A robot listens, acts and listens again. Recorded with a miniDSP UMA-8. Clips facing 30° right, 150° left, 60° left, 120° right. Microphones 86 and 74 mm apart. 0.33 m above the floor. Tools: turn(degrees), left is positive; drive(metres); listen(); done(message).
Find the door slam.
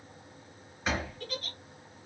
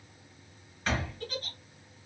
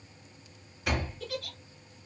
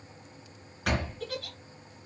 turn(degrees=-110)
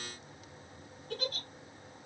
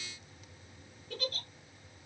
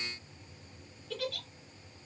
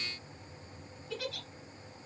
done("I heard a door slam from this way, but can't make it out now.")